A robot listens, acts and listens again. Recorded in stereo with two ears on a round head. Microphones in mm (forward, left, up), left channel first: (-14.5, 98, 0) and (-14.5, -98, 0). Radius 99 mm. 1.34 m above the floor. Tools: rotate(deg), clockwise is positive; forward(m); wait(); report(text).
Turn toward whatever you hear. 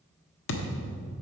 rotate(-60)
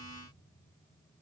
wait()
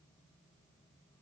report("I heard a thud, but can't make it out now. It was about straight ahead or 60° left.")